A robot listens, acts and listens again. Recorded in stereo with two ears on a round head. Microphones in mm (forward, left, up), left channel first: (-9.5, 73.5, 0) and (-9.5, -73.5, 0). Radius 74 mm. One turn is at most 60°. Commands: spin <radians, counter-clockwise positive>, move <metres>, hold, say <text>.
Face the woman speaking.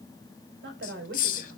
spin -1.05
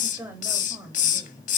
spin -0.17
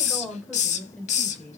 say Facing the woman speaking.